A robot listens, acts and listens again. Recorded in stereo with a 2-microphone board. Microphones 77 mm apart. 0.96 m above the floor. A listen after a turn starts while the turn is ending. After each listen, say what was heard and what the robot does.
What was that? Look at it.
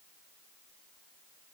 Keep listening.
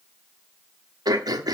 The throat clearing: about 55° right or 125° right. Turn 55° right.
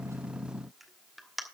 Found it: throat clearing, straight ahead, 1 to 2 m away.